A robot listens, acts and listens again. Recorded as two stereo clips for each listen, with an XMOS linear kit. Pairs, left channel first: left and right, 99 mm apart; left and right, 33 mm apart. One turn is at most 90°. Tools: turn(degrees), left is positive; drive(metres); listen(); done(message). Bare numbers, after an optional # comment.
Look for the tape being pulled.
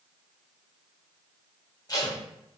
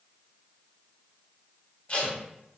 # The tape being pulled: about 40° left or 140° left.
turn(40)
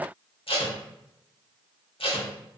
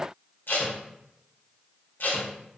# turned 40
# So it is at 100° left.
turn(90)
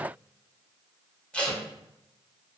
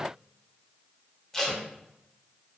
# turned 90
# The tape being pulled is now 15° left.
turn(15)
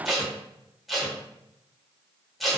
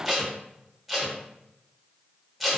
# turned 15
done("Found it: tape being pulled, straight ahead.")